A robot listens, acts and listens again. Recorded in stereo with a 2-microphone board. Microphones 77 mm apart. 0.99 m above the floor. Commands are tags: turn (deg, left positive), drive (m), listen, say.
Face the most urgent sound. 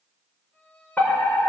<turn deg="25"/>
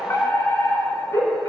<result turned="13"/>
<turn deg="140"/>
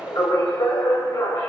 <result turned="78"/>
<turn deg="65"/>
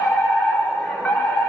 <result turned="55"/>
<turn deg="10"/>
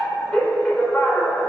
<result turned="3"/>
<turn deg="10"/>
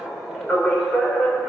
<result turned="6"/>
<say>Found it: a fire alarm, straight ahead, over 4 m away.</say>